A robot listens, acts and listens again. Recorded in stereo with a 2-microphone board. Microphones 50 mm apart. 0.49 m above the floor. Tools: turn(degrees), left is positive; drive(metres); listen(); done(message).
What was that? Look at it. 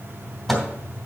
turn(degrees=30)
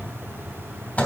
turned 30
turn(degrees=150)
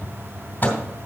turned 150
turn(degrees=45)
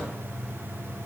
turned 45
listen()
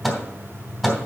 done("Facing the microwave, 2 to 4 m away.")